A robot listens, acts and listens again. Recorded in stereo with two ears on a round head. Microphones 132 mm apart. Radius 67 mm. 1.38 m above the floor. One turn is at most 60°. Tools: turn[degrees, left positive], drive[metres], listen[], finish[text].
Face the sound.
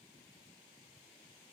Action: listen[]
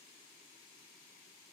Action: listen[]
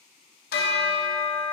Thought: The bell: about 70° left or 110° left.
Action: turn[60]
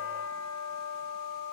Thought: So it is at 15° left.
Action: turn[15]
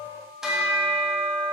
Action: finish[Found it: a bell, straight ahead.]